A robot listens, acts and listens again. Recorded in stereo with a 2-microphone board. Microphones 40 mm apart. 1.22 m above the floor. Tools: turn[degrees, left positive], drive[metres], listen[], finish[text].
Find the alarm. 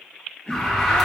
Action: turn[30]
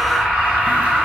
Thought: So it is at 30° right.
Action: turn[-30]
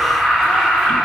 Thought: The alarm is now 15° right.
Action: turn[-15]
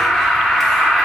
Action: finish[Found it: an alarm, straight ahead.]